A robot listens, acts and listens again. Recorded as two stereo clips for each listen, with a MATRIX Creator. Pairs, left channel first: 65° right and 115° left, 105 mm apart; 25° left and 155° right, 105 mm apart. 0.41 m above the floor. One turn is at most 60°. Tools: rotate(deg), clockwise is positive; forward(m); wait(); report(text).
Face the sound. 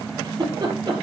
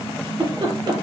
rotate(-60)
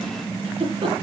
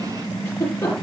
rotate(-60)
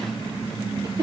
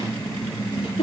rotate(-55)
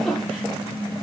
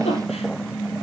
rotate(-20)
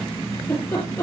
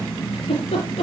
report("Facing the giggle, over 4 m away.")